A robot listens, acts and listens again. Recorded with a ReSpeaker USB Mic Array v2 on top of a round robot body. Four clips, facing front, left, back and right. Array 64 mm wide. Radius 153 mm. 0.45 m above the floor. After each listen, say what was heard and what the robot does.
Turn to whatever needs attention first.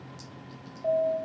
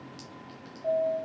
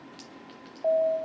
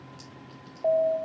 The alarm: 120° right. Turn 120° right.
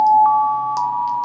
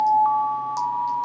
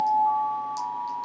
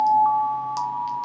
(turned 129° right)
The alarm is now 10° left. Turn 10° left.
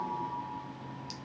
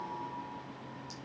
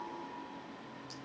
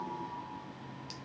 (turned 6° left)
Keep listening.
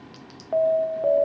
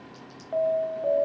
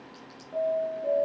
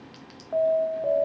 Facing the alarm, 1 to 2 m away.